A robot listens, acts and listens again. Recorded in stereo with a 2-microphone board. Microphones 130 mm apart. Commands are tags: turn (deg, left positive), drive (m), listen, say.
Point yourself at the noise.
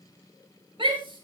<turn deg="-40"/>
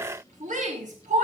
<turn deg="-100"/>
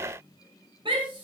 <turn deg="-40"/>
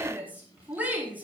<turn deg="-15"/>
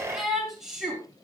<say>Facing the shout, over 4 m away.</say>